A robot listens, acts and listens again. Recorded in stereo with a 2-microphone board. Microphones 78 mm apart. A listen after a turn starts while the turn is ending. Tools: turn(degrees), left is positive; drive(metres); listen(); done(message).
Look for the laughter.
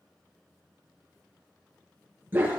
listen()
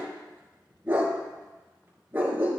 listen()
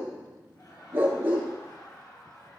turn(degrees=45)
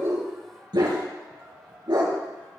done("Facing the laughter, over 4 m away.")